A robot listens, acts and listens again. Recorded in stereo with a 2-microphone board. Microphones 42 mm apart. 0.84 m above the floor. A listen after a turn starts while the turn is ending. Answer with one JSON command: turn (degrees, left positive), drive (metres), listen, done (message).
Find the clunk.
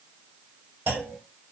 {"turn": -75}
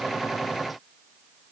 {"listen": true}
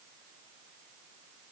{"done": "I heard a clunk, but can't make it out now. It was about straight ahead or 30° right."}